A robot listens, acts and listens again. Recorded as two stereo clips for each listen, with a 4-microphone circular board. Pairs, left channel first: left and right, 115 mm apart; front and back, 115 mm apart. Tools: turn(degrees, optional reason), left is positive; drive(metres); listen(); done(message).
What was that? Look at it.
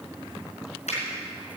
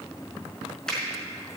turn(degrees=85, reason="The finger snap: 85° left.")
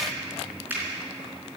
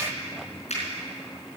turn(degrees=-15, reason="The finger snap is now 15° right.")
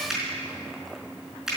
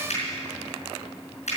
done("Found it: a finger snap, straight ahead, over 4 m away.")